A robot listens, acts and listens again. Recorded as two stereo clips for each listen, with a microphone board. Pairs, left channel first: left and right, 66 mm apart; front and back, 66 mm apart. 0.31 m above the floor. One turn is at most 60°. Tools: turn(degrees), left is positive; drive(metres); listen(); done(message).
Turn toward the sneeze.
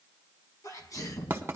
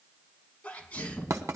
turn(degrees=60)
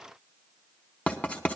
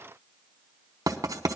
done("Facing where the sneeze came from. I can't hear it now.")